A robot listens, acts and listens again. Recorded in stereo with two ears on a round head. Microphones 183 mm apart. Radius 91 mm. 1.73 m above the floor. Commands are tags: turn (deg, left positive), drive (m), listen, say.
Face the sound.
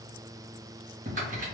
<turn deg="-40"/>
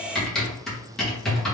<say>Facing the typing on a keyboard.</say>